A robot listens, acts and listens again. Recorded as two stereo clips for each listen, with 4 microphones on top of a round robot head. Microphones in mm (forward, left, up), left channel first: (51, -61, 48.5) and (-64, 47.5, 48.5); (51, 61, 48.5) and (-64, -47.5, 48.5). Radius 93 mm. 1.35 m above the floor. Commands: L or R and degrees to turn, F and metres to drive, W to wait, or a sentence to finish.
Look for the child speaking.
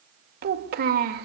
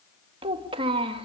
L165
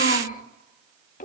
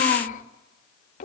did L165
Facing the child speaking, 1 to 2 m away.